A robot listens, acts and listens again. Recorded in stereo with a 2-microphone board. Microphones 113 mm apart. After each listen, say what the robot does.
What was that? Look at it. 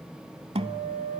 Turn 60° right.
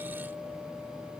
Keep listening.
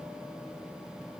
Keep listening.
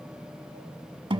Turn 50° right.
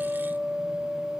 Facing the guitar, under 1 m away.